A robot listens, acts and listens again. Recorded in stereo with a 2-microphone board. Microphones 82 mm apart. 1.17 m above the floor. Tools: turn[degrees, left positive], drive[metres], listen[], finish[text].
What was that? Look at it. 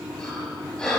Action: turn[30]
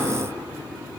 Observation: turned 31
Action: listen[]
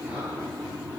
Action: listen[]
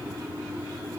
Action: finish[I heard breathing, but can't make it out now. It was about 20° right or 140° left.]